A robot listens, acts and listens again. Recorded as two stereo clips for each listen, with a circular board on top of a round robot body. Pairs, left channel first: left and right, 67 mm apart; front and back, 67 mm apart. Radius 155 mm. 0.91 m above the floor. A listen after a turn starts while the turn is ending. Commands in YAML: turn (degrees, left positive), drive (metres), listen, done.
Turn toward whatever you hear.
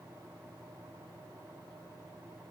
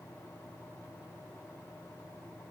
listen: true
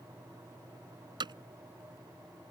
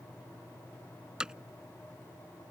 turn: -100
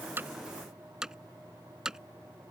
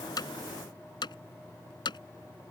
turn: -10
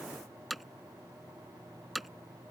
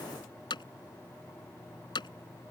done: "Facing the hammering."